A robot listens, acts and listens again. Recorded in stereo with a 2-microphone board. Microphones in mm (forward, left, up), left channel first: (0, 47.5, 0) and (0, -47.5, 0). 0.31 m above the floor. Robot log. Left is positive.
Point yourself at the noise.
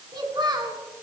note: The child speaking: about 50° right or 130° right.
cmd yaw -50
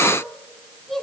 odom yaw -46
end: Facing the child speaking.